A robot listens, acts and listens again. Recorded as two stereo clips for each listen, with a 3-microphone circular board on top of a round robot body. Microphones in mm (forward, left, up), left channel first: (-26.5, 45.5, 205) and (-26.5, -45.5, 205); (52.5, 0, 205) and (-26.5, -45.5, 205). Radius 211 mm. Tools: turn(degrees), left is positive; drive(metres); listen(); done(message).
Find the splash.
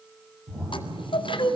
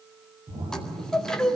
turn(degrees=-150)
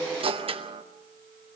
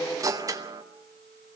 done("I heard a splash from this way, but can't make it out now.")